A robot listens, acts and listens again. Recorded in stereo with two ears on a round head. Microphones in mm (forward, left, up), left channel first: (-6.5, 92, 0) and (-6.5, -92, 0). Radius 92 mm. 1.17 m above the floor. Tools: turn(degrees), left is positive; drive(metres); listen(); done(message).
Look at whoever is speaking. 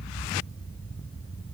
listen()
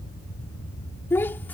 turn(degrees=30)
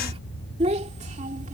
turn(degrees=-35)
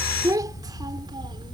turn(degrees=-20)
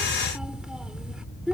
done("Found it: a child speaking, straight ahead.")